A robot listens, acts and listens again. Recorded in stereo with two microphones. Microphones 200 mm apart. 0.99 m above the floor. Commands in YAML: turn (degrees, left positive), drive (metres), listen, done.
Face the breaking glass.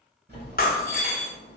turn: 50
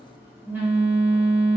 listen: true
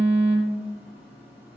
done: "I heard breaking glass, but can't make it out now. It was about straight ahead or 80° left."